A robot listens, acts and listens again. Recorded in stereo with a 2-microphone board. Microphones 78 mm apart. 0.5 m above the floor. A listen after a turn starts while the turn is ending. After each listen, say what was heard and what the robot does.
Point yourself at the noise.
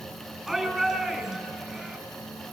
Turn 30° left.
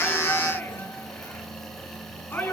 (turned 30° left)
So it is at 150° left. Turn 150° left.
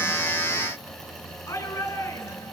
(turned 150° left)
The shout is now 40° left. Turn 40° left.
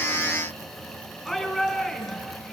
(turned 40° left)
Facing the shout.